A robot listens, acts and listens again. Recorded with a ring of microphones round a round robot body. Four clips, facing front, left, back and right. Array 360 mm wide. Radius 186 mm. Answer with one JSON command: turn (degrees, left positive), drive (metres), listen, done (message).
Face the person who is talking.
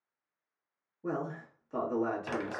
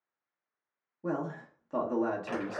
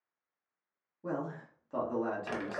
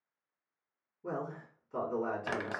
{"turn": 95}
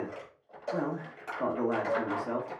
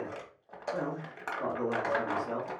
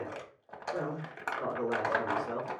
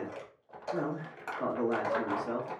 {"turn": -15}
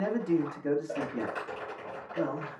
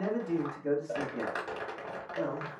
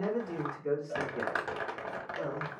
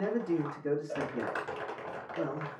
{"done": "Facing the man speaking, 1 to 2 m away."}